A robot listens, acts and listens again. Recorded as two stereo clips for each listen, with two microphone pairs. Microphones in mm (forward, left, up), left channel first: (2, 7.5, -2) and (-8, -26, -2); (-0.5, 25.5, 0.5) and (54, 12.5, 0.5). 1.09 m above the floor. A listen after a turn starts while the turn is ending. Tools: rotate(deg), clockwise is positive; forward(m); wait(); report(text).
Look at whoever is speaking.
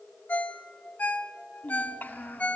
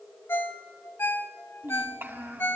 rotate(-35)
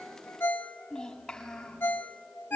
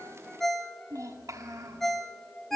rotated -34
report("Facing the child speaking, over 4 m away.")